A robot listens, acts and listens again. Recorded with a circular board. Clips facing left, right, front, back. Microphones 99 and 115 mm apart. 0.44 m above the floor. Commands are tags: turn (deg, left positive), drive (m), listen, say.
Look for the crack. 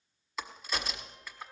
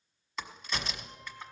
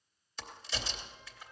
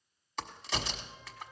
<turn deg="175"/>
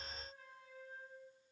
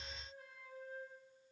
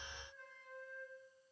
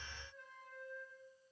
<say>Facing where the crack came from. I can't hear it now.</say>